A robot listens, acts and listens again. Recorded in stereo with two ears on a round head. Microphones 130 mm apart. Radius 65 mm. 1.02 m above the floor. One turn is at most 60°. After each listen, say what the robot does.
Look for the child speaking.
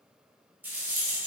Keep listening.
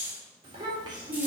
Turn 30° right.
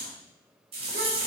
Keep listening.
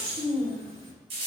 Turn 40° right.
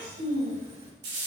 Turn 60° right.
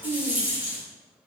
Turn 30° right.
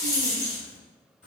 Keep listening.
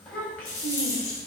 Turn 10° left.
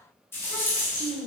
Found it: a child speaking, straight ahead.